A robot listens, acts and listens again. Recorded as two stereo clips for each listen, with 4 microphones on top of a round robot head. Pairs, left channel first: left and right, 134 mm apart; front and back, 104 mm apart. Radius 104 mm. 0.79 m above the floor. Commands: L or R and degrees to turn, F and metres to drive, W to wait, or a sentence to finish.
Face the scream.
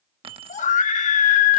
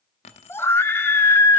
L70
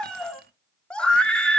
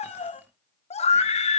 Facing the scream.